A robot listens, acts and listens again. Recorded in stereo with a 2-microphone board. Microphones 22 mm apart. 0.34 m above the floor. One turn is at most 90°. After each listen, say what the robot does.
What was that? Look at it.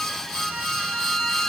Turn 90° left.
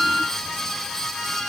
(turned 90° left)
Found it: a violin, straight ahead, 2 to 4 m away.